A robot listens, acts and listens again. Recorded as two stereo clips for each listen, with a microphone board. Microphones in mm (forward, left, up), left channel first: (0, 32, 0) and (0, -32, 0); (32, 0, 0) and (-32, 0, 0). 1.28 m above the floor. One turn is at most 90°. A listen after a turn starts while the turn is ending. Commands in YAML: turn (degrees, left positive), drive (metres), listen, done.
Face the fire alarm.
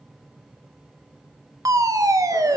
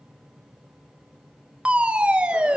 turn: -90
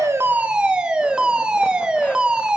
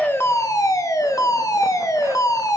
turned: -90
turn: -15
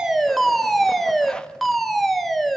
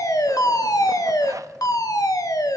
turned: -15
done: "Facing the fire alarm."